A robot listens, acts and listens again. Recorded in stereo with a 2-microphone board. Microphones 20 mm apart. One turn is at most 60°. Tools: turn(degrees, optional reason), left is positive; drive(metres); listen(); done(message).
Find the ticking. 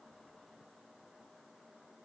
listen()
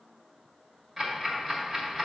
turn(degrees=-20, reason="The ticking: about 20° right or 160° right.")
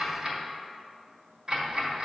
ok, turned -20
turn(degrees=-60, reason="So it is at 140° right.")
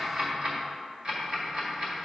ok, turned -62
turn(degrees=-60, reason="The ticking is now 80° right.")
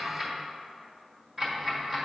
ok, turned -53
turn(degrees=-25, reason="The ticking is now 25° right.")
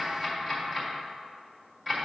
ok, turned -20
done("Facing the ticking.")